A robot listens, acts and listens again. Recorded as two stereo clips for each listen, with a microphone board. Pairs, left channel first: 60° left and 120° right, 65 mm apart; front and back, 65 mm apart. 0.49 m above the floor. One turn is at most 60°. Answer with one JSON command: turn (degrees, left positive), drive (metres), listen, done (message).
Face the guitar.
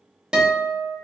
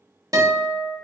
{"turn": 60}
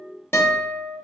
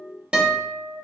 {"turn": 60}
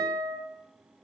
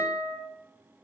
{"turn": 60}
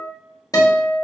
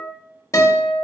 {"turn": 40}
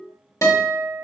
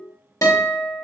{"turn": 30}
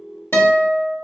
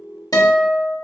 {"done": "Facing the guitar, 1 to 2 m away."}